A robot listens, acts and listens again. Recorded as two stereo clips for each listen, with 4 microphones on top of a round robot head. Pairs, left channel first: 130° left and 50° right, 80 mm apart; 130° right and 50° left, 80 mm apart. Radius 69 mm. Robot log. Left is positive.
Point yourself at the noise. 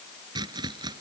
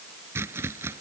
note: The chopping: 10° right.
cmd yaw -10
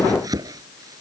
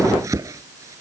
end: Facing the chopping.